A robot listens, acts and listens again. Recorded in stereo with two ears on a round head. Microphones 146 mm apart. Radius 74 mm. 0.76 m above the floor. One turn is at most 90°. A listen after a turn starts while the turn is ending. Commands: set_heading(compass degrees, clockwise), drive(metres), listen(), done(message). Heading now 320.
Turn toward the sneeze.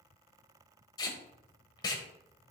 listen()
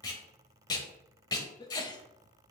set_heading(295)
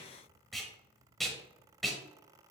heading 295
listen()
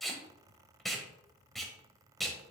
done("I heard a sneeze, but can't make it out now. It was about straight ahead or 130° left.")